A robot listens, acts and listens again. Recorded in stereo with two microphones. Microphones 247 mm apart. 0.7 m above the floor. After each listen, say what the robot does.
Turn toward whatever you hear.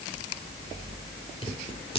Turn 20° left.
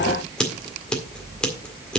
Facing the scissors.